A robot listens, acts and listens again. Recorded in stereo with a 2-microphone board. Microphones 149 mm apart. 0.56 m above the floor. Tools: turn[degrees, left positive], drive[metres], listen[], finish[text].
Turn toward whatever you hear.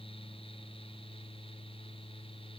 Action: listen[]
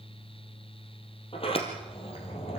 Thought: The sliding door: about 40° left or 140° left.
Action: turn[40]
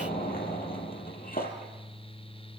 Thought: So it is at 100° left.
Action: turn[100]
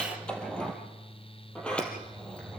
Action: finish[Facing the sliding door.]